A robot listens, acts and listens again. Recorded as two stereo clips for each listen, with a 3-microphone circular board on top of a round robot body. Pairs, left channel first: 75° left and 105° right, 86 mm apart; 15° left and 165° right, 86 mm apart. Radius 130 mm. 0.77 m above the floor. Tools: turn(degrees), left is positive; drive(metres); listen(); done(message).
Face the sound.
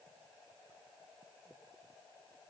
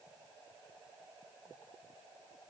listen()
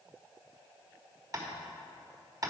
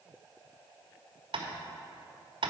turn(degrees=-155)
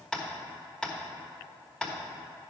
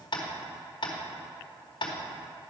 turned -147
done("Found it: tapping, straight ahead, 1 to 2 m away.")